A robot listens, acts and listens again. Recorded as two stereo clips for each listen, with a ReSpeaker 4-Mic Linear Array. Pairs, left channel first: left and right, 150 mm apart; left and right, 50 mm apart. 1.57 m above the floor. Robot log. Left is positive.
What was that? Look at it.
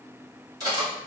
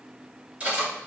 note: The cutlery clinking: about 25° right or 155° right.
cmd yaw -25
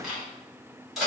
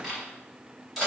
end: Facing the cutlery clinking, 1 to 2 m away.